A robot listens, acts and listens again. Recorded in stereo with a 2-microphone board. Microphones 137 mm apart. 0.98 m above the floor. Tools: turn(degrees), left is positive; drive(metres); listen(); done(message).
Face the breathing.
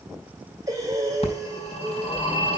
turn(degrees=-25)
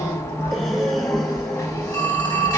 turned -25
done("Facing the breathing, 2 to 4 m away.")